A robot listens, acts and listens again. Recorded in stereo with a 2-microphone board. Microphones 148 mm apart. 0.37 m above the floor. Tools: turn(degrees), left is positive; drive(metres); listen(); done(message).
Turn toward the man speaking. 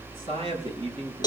turn(degrees=-40)
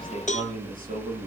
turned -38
turn(degrees=-100)
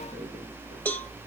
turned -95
listen()
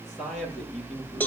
done("Found it: a man speaking, straight ahead, over 4 m away.")